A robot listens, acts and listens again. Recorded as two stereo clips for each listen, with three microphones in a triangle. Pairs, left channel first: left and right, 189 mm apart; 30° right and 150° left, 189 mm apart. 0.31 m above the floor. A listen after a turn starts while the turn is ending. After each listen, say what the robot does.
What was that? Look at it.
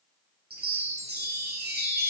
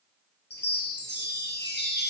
Turn 55° right.
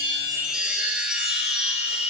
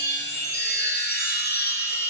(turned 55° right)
Found it: a chime, straight ahead.